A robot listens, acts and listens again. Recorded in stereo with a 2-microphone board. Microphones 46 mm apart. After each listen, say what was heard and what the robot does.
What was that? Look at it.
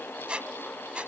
The squeak: about 25° right or 155° right. Turn 25° right.
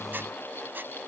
So it is at 130° right. Turn 130° right.
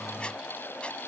Keep listening.
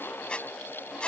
The squeak is now 25° left. Turn 25° left.
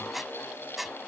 Facing the squeak.